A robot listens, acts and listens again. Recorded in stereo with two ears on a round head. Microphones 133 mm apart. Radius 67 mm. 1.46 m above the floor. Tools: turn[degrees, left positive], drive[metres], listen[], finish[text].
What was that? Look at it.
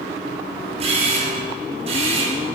Thought: The camera shutter: about 40° right or 140° right.
Action: turn[-40]
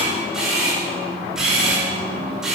Action: finish[Facing the camera shutter, over 4 m away.]